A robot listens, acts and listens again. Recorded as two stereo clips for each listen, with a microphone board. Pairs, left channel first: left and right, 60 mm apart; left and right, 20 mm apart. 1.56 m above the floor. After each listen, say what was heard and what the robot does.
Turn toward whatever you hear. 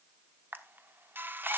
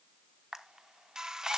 The camera shutter: about 35° right or 145° right. Turn 35° right.
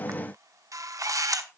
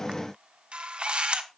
So it is at 110° right. Turn 110° right.
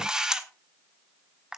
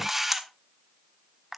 The camera shutter is now 10° right. Turn 10° right.
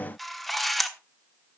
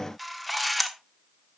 Facing the camera shutter, 1 to 2 m away.